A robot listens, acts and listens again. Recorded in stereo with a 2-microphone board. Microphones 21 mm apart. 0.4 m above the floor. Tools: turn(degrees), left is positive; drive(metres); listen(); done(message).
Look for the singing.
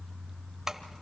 listen()
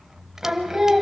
turn(degrees=-30)
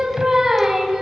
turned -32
turn(degrees=-20)
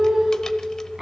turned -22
turn(degrees=-25)
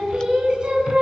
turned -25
turn(degrees=-140)
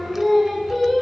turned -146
done("Facing the singing.")